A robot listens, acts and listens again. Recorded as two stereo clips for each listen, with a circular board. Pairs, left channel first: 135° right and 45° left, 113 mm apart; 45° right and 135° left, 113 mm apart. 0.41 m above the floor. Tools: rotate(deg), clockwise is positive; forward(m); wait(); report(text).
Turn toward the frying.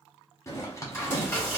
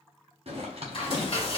rotate(70)
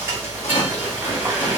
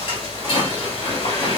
rotate(25)
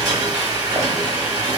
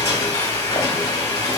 report("Facing the frying.")